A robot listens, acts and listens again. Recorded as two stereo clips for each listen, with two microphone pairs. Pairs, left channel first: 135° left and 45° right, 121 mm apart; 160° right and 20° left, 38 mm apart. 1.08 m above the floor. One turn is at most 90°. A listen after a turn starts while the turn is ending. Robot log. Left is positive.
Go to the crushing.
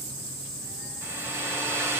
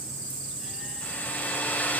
cmd idle
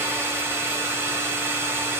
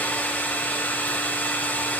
cmd idle
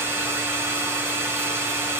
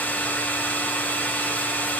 end: I can't make out crushing, only a hair dryer.